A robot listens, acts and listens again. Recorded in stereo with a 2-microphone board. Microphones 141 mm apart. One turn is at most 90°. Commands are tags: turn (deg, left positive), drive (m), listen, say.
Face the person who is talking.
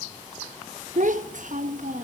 <turn deg="-65"/>
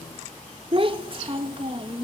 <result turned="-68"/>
<turn deg="-40"/>
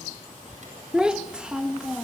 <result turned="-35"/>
<say>Found it: a child speaking, straight ahead.</say>